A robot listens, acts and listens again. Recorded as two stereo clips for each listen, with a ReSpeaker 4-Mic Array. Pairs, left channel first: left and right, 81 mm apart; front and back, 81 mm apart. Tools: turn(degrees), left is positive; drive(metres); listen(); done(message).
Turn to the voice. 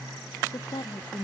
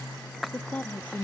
turn(degrees=70)
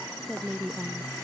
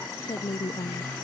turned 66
done("Facing the woman speaking.")